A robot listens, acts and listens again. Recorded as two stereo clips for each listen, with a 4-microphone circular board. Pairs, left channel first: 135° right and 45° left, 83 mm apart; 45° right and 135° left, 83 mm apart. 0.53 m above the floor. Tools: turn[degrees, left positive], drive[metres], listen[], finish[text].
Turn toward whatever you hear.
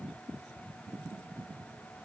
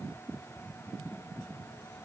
Action: listen[]
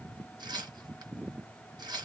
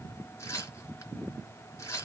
Thought: The tearing paper: 10° left.
Action: turn[10]
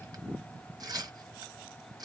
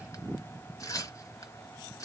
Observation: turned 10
Action: finish[Found it: tearing paper, straight ahead.]